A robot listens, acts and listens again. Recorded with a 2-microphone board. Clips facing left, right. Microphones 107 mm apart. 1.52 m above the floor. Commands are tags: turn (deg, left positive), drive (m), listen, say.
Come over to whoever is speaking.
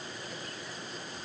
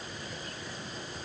<listen/>
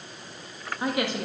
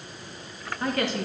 <turn deg="30"/>
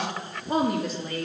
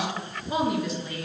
<turn deg="135"/>
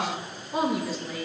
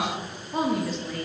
<drive m="1.0"/>
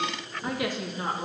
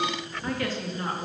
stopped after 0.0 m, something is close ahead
<turn deg="15"/>
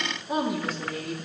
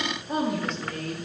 <say>Something is in my way. I am facing the woman speaking but have not reached it.</say>